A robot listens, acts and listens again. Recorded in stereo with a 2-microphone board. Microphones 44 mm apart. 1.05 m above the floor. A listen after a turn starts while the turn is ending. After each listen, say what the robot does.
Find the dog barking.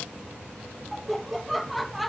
Keep listening.
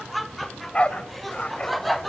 Turn 25° left.
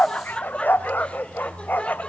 Turn 120° left.
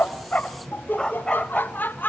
Turn 20° left.
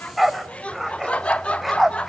Found it: a dog barking, straight ahead, 1 to 2 m away.